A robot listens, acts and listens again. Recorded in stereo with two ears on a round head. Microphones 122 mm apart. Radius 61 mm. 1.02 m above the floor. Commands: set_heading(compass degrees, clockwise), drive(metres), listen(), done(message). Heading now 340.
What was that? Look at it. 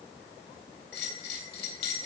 set_heading(250)
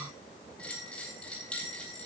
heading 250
set_heading(240)
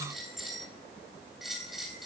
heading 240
done("Found it: a bell, straight ahead.")